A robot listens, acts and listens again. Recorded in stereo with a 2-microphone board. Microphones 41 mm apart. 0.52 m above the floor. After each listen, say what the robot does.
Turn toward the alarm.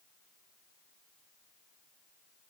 Keep listening.
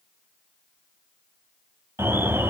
Turn 70° right.
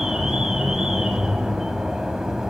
Turn 10° right.
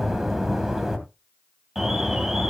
Facing the alarm.